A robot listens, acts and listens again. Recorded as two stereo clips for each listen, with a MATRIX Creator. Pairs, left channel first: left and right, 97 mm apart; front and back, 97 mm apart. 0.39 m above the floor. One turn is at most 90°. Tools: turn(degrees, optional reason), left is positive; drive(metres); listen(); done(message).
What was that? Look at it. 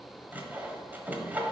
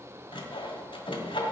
turn(degrees=-20, reason="The sawing: 20° right.")
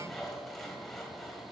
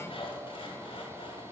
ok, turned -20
done("Facing the sawing, 1 to 2 m away.")